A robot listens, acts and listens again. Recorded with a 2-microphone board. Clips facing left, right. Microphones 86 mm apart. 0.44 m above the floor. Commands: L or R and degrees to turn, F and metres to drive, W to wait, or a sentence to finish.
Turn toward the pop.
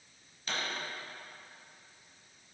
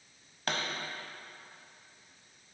R75
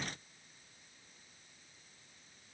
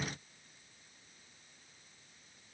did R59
W
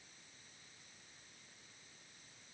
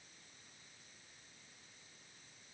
I heard a pop, but can't make it out now. It was about 15° right or 45° right.